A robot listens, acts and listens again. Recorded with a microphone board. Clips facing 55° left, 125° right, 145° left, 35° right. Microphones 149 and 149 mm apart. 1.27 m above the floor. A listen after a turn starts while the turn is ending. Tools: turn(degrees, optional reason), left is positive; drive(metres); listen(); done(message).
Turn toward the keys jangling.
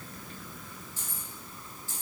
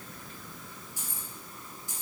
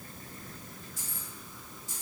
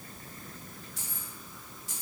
turn(degrees=-55, reason="The keys jangling: 55° right.")
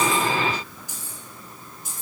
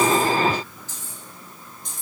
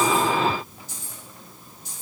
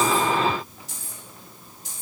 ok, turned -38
turn(degrees=-30, reason="The keys jangling is now 30° right.")
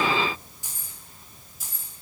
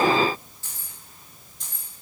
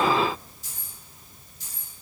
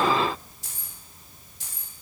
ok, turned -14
turn(degrees=-30, reason="The keys jangling is now 30° right.")
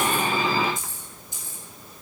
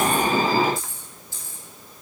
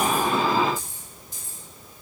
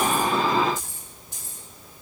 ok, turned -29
turn(degrees=-15, reason="The keys jangling is now 15° right.")
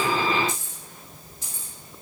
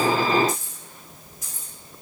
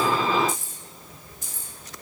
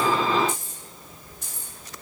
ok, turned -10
done("Facing the keys jangling.")